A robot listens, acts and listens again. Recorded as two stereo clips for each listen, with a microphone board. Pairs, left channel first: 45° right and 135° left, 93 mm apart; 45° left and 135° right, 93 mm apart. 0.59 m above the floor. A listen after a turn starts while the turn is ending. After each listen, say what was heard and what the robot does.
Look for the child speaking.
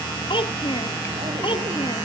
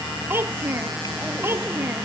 The child speaking: 70° right. Turn 70° right.
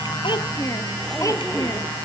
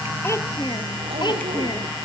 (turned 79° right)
The child speaking is now 10° left. Turn 10° left.
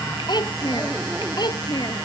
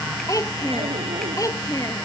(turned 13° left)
Found it: a child speaking, straight ahead.